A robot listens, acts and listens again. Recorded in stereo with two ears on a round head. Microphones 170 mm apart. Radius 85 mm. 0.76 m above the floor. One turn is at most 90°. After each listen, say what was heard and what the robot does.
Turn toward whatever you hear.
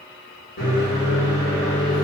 The microwave: about 60° left or 120° left. Turn 60° left.
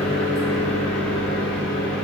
So it is at 15° left. Turn 15° left.
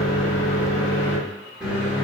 Found it: a microwave, straight ahead, 1 to 2 m away.